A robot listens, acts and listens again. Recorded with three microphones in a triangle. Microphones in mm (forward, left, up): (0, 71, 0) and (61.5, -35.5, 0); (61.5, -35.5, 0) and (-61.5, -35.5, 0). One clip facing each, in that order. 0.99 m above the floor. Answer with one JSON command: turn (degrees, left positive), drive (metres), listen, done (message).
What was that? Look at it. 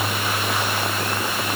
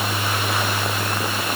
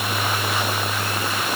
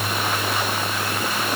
{"listen": true}
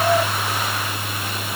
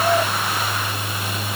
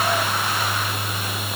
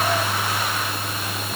{"listen": true}
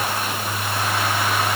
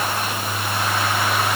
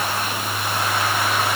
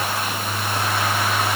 {"done": "I can't make out anything."}